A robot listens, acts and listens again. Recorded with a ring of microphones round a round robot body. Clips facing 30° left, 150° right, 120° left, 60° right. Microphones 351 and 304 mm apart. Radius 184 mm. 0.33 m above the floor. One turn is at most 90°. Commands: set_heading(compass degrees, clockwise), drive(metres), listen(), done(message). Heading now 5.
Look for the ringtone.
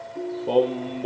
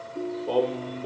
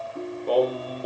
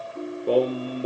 set_heading(275)
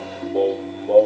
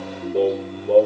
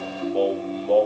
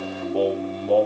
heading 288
set_heading(243)
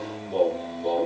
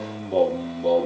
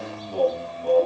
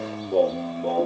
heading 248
listen()
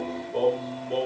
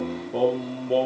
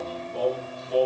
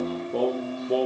listen()
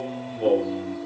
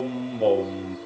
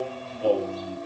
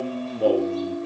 set_heading(238)
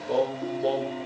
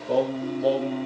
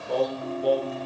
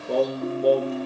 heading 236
listen()
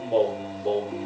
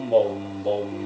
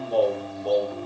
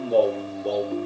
listen()
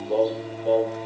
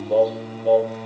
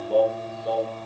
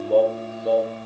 done("I heard a ringtone from this way, but can't make it out now.")